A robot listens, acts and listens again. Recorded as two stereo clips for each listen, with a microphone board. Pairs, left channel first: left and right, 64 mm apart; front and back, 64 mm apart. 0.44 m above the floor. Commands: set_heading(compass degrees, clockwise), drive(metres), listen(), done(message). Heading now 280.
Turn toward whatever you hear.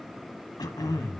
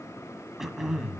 set_heading(185)
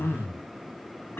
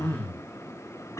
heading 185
set_heading(150)
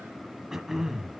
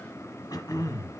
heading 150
done("Facing the throat clearing, 1 to 2 m away.")